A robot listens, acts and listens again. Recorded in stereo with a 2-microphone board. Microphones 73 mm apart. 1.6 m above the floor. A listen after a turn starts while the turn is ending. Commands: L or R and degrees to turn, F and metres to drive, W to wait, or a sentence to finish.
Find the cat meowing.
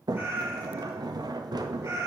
R40
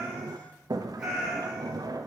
R15
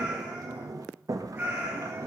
R30
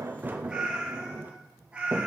R15
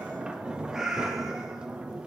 Facing the cat meowing, 2 to 4 m away.